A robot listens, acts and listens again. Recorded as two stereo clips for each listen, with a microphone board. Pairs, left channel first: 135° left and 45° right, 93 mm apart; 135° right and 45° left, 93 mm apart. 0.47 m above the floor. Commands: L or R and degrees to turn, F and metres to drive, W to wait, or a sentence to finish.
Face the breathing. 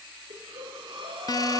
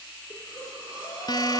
R80
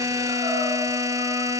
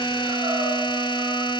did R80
W
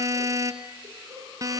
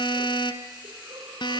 W
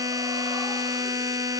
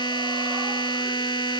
I heard breathing from this way, but can't make it out now.